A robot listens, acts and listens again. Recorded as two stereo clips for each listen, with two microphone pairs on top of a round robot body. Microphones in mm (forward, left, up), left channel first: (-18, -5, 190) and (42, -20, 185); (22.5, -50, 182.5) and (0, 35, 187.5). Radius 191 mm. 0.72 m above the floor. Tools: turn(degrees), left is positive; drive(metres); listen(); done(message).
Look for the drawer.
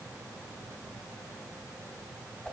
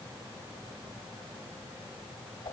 listen()
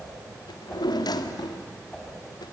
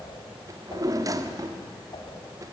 turn(degrees=160)
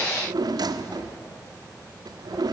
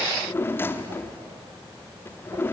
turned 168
done("Found it: a drawer, straight ahead.")